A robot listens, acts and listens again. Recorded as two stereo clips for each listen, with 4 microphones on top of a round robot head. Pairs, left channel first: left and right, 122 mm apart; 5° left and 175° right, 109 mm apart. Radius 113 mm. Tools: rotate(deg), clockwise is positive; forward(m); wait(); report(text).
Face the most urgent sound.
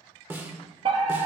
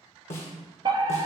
rotate(130)
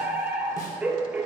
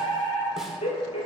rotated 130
rotate(15)
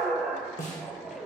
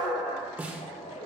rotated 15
report("Found it: a fire alarm, straight ahead.")